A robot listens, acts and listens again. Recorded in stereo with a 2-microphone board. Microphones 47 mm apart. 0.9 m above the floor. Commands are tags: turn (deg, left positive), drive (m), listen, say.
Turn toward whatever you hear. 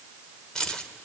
<turn deg="15"/>
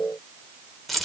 <say>Facing the keys jangling.</say>